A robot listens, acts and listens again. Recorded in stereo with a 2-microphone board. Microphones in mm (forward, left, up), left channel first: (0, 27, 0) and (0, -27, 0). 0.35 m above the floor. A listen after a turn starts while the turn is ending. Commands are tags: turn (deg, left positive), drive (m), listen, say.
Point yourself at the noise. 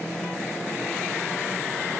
<listen/>
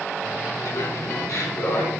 <turn deg="70"/>
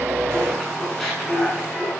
<say>Found it: laughter, straight ahead.</say>